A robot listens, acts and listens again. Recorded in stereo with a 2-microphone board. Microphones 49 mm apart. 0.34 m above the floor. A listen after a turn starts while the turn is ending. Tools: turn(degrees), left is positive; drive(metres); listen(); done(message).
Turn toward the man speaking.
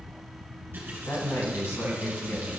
turn(degrees=65)
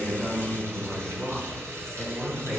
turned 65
done("Found it: a man speaking, straight ahead, 2 to 4 m away.")